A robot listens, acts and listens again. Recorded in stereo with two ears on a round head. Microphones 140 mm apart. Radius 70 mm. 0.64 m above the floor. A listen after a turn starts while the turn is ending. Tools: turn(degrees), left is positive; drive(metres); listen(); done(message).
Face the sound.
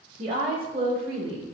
turn(degrees=-65)
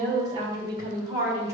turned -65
turn(degrees=-20)
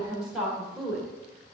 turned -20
done("Facing the woman speaking, 2 to 4 m away.")